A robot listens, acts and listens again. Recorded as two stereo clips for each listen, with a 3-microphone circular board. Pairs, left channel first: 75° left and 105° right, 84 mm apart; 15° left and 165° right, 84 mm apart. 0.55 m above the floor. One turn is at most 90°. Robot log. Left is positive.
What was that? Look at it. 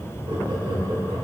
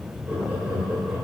note: The laughter: 90° right.
cmd yaw -90
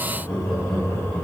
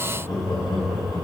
end: Facing the laughter.